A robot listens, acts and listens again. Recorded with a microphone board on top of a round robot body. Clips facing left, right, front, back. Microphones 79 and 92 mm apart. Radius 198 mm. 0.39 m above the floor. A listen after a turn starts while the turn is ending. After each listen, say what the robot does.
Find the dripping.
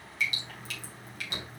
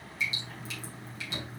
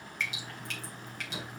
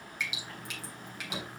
Turn 100° left.
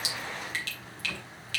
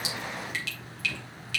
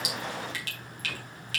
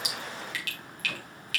Turn 50° left.
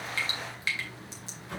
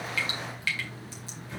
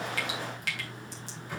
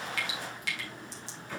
Turn 25° left.
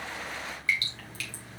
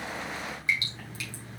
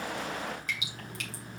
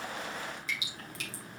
Turn 20° right.
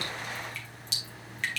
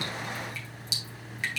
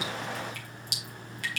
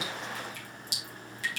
Turn 10° right.
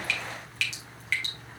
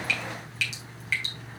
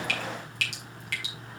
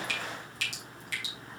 Facing the dripping, 2 to 4 m away.